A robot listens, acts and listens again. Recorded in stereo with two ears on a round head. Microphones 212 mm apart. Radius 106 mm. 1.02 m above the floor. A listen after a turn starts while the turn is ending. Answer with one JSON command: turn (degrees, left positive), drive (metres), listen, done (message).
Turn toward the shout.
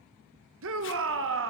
{"turn": -60}
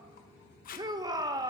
{"turn": -20}
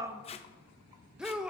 {"done": "Facing the shout, under 1 m away."}